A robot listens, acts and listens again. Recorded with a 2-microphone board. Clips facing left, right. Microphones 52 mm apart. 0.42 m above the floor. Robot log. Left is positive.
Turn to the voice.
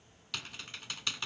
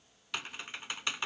cmd idle
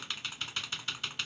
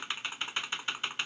cmd idle
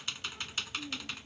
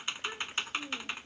note: The child speaking: about 65° right or 115° right.
cmd yaw -65
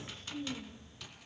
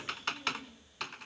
end: Facing the child speaking.